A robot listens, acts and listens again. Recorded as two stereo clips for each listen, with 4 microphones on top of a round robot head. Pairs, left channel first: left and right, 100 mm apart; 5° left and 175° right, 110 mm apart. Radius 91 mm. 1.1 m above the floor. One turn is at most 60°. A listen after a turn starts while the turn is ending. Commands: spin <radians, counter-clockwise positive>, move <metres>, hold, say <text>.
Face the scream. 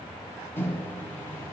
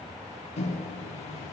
hold
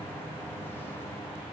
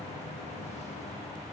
hold
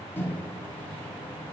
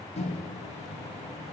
say I can't make out a scream, only a microwave.